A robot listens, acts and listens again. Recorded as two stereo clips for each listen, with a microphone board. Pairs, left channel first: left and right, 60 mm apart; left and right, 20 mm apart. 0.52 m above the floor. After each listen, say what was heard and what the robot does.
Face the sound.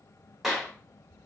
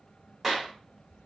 Turn 30° right.
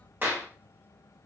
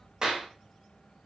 So it is at 140° right. Turn 140° right.
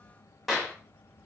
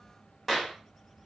Found it: a clap, straight ahead.